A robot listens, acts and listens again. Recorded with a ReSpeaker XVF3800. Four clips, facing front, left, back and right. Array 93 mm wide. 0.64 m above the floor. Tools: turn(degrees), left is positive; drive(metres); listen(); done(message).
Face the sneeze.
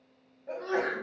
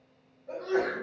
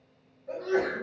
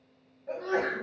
turn(degrees=-40)
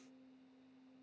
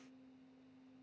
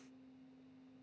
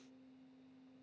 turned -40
done("Facing where the sneeze came from. I can't hear it now.")